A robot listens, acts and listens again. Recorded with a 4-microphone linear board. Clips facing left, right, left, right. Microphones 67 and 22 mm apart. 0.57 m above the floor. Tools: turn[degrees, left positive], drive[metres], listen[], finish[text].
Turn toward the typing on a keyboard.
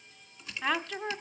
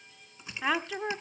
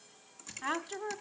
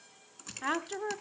Thought: The typing on a keyboard: about 25° right or 155° right.
Action: turn[-25]
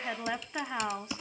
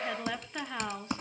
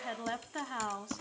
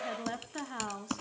Thought: So it is at 130° right.
Action: turn[-130]
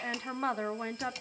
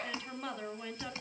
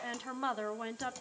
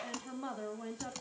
Thought: The typing on a keyboard is now 30° right.
Action: turn[-30]
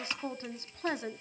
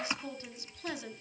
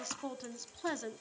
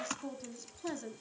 Thought: The typing on a keyboard is now 15° right.
Action: turn[-15]
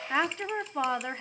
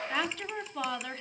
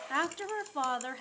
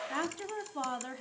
Action: listen[]
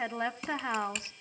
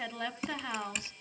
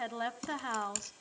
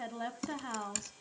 Action: finish[Found it: typing on a keyboard, straight ahead.]